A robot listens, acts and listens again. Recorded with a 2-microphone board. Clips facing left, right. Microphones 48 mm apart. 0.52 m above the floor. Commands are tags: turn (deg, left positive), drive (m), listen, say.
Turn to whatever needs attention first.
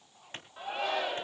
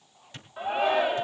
<turn deg="-20"/>
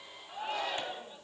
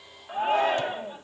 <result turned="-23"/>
<turn deg="-135"/>
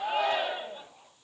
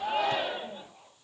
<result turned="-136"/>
<say>Facing the shout.</say>